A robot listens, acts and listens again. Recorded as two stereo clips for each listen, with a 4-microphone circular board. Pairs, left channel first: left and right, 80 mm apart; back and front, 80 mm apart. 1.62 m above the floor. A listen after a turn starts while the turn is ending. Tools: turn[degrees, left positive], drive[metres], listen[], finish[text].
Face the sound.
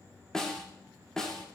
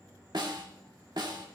Thought: The snare drum: 10° left.
Action: turn[10]
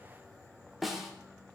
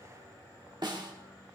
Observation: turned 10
Action: finish[Facing the snare drum.]